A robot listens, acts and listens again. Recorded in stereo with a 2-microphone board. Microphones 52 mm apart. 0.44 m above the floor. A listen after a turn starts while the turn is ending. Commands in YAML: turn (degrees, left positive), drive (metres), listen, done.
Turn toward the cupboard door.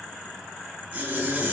listen: true
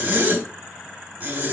listen: true
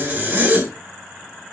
done: "I can't make out a cupboard door, only a zipper."